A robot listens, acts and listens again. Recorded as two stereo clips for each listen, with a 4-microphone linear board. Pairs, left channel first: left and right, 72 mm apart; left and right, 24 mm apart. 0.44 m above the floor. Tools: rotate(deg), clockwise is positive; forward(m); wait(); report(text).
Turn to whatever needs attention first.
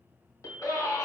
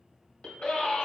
rotate(-50)
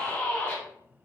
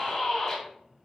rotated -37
rotate(-20)
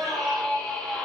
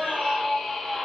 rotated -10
rotate(-10)
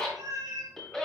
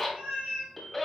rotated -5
report("Facing the scream.")